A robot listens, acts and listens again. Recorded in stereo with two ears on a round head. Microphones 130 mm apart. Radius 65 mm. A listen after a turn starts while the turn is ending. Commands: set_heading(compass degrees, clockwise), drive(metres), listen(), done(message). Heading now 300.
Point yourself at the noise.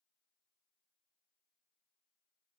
listen()
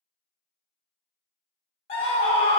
set_heading(260)
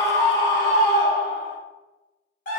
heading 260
set_heading(165)
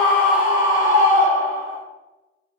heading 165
set_heading(190)
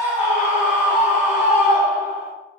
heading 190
set_heading(200)
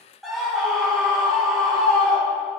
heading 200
done("Found it: a scream, straight ahead.")